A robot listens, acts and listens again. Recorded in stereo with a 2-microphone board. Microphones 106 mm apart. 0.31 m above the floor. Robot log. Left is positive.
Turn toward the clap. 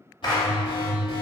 note: The clap: about 45° left or 135° left.
cmd yaw +45
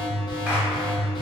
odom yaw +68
cmd idle
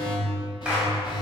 cmd idle
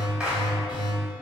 end: I heard a clap, but can't make it out now. It was about 25° right or 70° left.